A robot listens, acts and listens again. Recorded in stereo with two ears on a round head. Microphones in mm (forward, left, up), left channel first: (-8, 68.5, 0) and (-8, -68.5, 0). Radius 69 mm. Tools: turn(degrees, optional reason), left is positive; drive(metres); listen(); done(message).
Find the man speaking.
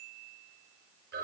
listen()
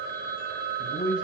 turn(degrees=70, reason="The man speaking: about 70° left or 110° left.")
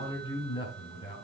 turn(degrees=35, reason="So it is at 35° left.")
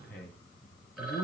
turn(degrees=10, reason="The man speaking is now 10° left.")
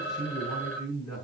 done("Facing the man speaking, over 4 m away.")